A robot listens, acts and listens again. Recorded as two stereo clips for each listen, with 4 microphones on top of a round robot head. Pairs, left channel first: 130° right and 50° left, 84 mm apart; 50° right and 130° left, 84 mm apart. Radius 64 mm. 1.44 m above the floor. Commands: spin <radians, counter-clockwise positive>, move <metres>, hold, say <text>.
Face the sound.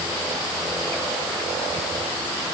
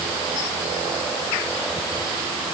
hold
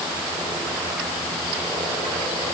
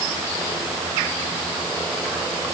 hold
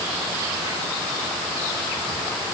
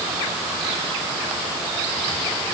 say I can't make out anything.